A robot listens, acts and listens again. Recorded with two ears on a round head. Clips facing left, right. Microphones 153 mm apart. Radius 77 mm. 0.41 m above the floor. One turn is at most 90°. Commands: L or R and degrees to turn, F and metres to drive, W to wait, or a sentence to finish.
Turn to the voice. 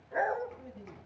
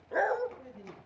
R30
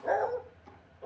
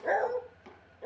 W
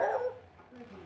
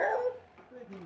R90
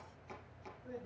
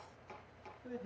R35
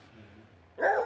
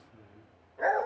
L10
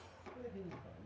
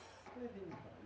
Facing the man speaking.